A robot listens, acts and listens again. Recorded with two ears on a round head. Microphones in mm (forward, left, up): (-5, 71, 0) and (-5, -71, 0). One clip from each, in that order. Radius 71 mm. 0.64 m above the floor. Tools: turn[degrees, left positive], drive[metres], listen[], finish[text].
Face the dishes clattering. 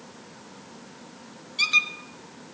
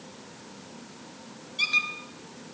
Action: listen[]
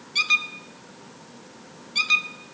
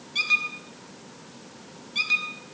Action: listen[]
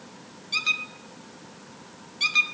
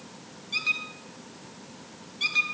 Action: finish[I can't make out dishes clattering to turn to.]